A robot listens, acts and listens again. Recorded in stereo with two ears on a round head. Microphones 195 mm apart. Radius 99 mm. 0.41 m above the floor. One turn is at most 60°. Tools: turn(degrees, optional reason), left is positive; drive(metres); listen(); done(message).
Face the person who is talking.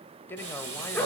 turn(degrees=30)
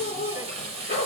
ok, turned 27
listen()
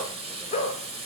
listen()
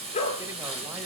done("I heard a man speaking, but can't make it out now. It was about 20° right or 145° left.")